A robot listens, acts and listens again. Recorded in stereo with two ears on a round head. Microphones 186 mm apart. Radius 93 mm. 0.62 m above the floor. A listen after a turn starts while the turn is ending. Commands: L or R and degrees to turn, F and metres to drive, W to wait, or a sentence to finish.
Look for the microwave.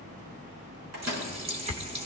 R90
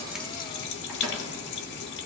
W
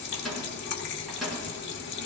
Facing the microwave, over 4 m away.